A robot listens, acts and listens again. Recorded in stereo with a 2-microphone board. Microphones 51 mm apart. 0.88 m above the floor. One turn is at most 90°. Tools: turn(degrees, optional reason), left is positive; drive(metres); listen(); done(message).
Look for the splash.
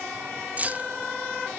listen()
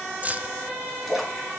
turn(degrees=-30)
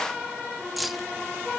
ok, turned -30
listen()
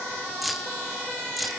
done("I heard a splash, but can't make it out now. It was about 25° left or 145° right.")